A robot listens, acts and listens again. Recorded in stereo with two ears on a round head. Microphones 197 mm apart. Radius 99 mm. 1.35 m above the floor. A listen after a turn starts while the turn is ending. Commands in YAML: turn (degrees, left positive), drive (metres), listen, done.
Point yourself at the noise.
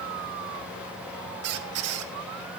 turn: -65
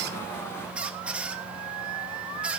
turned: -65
done: "Found it: a squeak, straight ahead, 1 to 2 m away."